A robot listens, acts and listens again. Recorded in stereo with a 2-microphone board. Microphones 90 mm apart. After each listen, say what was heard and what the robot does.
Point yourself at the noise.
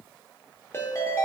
The ringtone: about 30° left or 150° left. Turn 30° left.
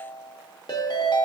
So it is at 115° left. Turn 115° left.
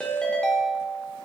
The ringtone is now 10° left. Turn 10° left.
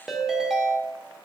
Found it: a ringtone, straight ahead.